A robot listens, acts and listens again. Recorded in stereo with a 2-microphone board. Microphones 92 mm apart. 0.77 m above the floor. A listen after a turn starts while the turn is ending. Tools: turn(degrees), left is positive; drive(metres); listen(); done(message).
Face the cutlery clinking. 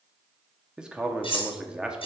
turn(degrees=90)
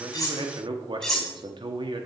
done("Facing the cutlery clinking, 2 to 4 m away.")